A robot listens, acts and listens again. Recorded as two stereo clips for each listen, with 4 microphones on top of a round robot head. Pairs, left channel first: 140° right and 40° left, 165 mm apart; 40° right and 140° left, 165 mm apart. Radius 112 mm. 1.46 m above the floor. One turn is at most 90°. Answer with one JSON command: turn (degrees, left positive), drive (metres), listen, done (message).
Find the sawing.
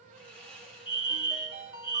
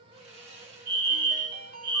{"turn": 90}
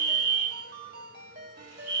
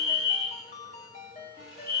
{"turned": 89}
{"turn": 50}
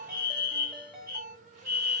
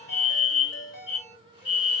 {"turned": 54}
{"listen": true}
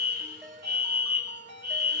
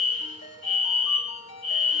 {"done": "Facing where the sawing came from. I can't hear it now."}